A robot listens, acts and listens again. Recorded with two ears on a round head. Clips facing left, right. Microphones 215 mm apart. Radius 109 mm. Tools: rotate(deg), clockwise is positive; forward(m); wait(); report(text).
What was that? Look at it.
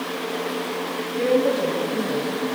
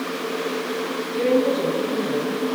rotate(90)
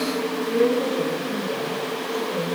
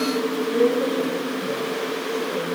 wait()
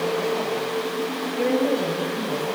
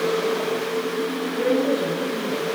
rotate(10)
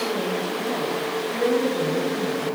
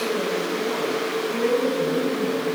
report("Facing the woman speaking.")